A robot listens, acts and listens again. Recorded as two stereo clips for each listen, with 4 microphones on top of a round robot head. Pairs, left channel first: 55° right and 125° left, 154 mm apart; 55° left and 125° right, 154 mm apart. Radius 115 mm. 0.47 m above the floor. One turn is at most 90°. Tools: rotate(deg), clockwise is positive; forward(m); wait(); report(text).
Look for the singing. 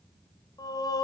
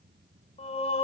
report("Found it: singing, straight ahead, 2 to 4 m away.")